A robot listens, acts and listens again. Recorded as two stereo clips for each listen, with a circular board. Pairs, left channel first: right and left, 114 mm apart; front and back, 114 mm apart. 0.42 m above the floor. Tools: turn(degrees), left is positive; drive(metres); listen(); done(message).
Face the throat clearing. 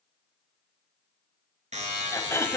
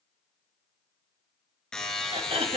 turn(degrees=-155)
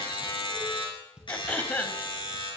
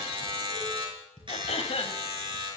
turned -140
turn(degrees=-15)
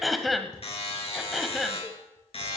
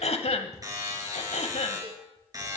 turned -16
done("Facing the throat clearing, 1 to 2 m away.")